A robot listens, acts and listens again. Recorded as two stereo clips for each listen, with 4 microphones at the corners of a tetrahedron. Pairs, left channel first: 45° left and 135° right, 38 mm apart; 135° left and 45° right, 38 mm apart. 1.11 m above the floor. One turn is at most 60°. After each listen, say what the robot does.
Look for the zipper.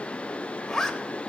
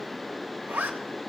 Turn 35° right.
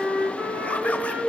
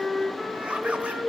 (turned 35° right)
Keep listening.
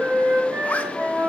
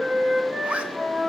Facing the zipper.